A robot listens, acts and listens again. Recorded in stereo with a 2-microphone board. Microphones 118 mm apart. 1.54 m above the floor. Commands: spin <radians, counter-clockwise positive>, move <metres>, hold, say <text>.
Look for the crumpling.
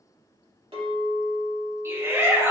hold
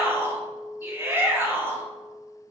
hold
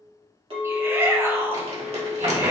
spin -1.13
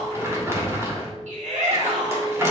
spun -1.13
spin -0.44
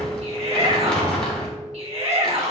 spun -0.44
say Facing the crumpling, 2 to 4 m away.